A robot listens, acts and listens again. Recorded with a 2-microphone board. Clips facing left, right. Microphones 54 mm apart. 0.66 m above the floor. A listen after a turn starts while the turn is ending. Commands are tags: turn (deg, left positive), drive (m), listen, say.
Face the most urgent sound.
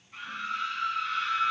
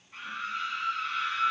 <turn deg="30"/>
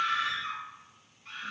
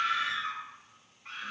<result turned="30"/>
<turn deg="-35"/>
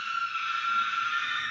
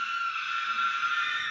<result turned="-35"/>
<say>Found it: a scream, straight ahead.</say>